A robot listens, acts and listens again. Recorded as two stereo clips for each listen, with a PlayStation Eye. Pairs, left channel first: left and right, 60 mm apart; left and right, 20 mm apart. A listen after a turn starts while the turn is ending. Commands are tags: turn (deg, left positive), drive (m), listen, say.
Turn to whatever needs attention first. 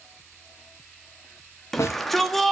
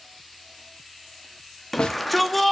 <turn deg="30"/>
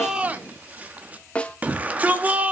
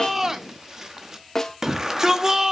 <turn deg="-25"/>
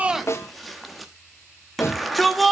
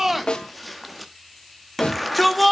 <say>Facing the shout, 1 to 2 m away.</say>